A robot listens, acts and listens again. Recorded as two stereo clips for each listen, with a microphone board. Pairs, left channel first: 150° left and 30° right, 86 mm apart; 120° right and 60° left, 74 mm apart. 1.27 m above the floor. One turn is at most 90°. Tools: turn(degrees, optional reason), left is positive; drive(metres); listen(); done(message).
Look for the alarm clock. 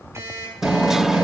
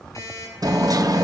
turn(degrees=-85, reason="The alarm clock: 85° right.")
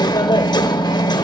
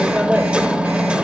listen()
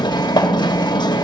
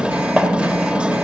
listen()
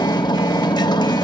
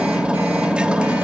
done("Facing where the alarm clock came from. I can't hear it now.")